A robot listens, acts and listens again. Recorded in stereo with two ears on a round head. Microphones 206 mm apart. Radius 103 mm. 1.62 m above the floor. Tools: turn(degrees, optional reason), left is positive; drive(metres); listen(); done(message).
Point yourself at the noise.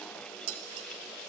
turn(degrees=-70, reason="The dishes clattering: about 70° right or 110° right.")
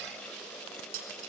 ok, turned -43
turn(degrees=-65, reason="So it is at 65° right.")
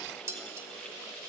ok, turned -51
turn(degrees=-15, reason="The dishes clattering is now 15° right.")
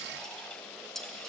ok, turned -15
done("Facing the dishes clattering, 2 to 4 m away.")